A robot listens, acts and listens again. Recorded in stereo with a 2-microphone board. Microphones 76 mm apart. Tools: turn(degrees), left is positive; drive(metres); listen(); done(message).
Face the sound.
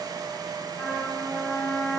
turn(degrees=20)
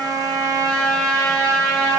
turn(degrees=135)
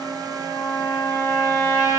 turn(degrees=50)
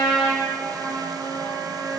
done("Found it: a trumpet, straight ahead, 1 to 2 m away.")